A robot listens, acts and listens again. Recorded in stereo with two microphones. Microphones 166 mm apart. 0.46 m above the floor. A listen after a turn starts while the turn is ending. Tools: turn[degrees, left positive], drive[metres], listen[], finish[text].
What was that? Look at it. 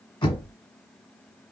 Thought: The knocking: about 30° left or 150° left.
Action: turn[30]
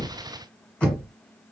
Thought: So it is at 10° left.
Action: turn[10]
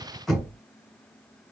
Action: finish[Found it: knocking, straight ahead.]